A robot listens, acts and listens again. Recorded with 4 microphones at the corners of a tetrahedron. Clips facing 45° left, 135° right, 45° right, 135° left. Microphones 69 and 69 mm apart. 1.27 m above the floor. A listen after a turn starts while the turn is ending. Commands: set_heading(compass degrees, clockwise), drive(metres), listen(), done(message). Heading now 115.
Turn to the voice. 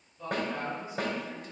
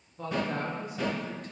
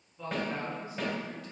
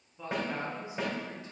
set_heading(270)
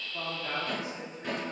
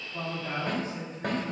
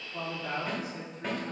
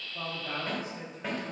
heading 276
set_heading(311)
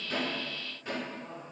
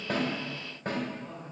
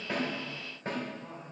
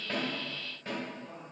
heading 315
done("Found it: a woman speaking, straight ahead, 2 to 4 m away.")